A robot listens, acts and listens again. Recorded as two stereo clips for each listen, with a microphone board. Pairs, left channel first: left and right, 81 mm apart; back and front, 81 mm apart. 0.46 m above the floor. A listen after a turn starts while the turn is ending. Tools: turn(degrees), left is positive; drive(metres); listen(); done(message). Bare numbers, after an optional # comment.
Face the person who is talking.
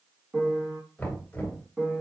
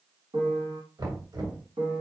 listen()
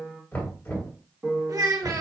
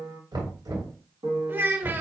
# The child speaking: 60° right.
turn(-60)
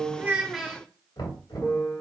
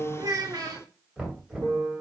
done("Facing the child speaking, under 1 m away.")